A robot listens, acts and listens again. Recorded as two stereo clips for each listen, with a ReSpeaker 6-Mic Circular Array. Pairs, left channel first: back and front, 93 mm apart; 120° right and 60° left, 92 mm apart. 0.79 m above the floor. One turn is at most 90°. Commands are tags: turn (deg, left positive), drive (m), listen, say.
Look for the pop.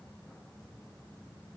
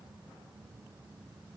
<listen/>
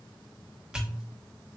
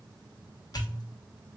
<turn deg="-80"/>
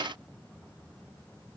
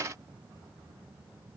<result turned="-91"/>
<turn deg="10"/>
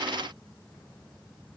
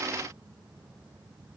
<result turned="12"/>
<say>I heard a pop from this way, but can't make it out now.</say>